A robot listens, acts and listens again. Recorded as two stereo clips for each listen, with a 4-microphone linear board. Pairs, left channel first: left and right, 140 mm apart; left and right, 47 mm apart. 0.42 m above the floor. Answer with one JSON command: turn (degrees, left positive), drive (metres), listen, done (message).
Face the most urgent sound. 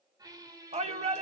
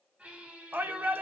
{"turn": -50}
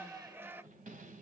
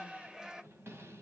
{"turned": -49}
{"turn": -20}
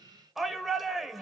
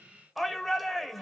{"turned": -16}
{"done": "Facing the shout, 1 to 2 m away."}